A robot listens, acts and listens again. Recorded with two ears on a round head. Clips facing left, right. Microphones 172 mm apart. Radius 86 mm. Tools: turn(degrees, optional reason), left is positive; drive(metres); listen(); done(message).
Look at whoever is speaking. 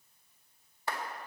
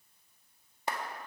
listen()
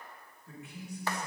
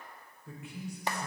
turn(degrees=-65, reason="The man speaking: about 65° right or 115° right.")
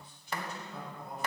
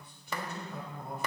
turn(degrees=-45, reason="So it is at 45° right.")
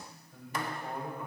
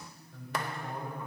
turn(degrees=10, reason="The man speaking is now 10° left.")
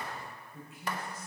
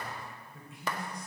done("Found it: a man speaking, straight ahead.")